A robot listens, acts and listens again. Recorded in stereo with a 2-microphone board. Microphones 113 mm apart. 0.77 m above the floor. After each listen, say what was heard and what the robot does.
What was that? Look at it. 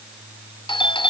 The doorbell: about 50° left or 130° left. Turn 50° left.
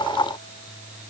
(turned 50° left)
Keep listening.
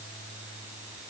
Keep listening.
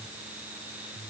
I heard a doorbell, but can't make it out now. It was about straight ahead or 80° left.